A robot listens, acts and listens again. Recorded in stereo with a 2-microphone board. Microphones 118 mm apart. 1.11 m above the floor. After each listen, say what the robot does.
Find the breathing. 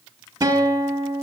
Keep listening.
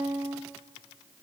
Keep listening.
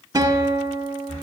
Turn 90° left.
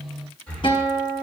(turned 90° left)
Turn 10° left.
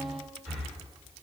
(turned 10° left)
Facing the breathing.